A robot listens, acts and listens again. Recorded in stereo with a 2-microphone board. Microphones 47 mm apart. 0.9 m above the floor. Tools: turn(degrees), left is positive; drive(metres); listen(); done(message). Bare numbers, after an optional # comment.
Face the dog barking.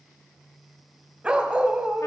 # The dog barking: about 25° right or 155° right.
turn(-25)
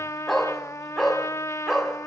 done("Found it: a dog barking, straight ahead.")